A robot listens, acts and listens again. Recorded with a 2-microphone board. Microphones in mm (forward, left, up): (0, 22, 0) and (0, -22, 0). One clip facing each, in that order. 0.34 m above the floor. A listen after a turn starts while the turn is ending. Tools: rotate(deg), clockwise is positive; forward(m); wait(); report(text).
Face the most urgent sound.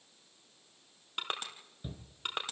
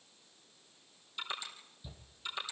rotate(-45)
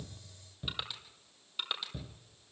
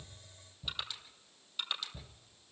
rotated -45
rotate(-85)
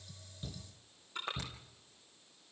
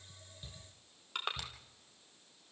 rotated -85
report("Facing the shout, over 4 m away.")